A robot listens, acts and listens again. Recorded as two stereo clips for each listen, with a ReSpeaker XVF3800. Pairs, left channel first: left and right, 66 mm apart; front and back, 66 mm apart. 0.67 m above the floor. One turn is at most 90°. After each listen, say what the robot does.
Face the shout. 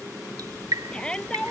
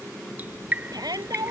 Turn 90° left.
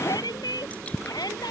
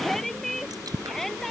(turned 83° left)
Turn 85° left.
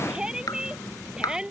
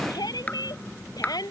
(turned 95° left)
Turn 10° right.
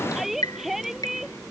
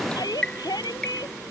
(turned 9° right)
Found it: a shout, straight ahead.